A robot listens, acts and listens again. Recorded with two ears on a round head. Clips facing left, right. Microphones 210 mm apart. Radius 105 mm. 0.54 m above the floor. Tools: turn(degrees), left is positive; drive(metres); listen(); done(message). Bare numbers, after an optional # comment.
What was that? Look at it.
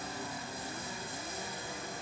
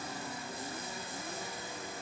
listen()
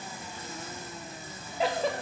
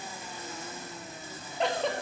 turn(30)
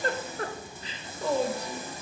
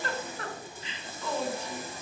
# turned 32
# So it is at 145° left.
turn(145)
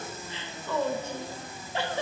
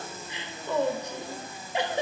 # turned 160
# The giggle is now 15° right.
turn(-15)
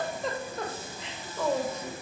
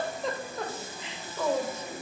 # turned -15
done("Found it: a giggle, straight ahead, under 1 m away.")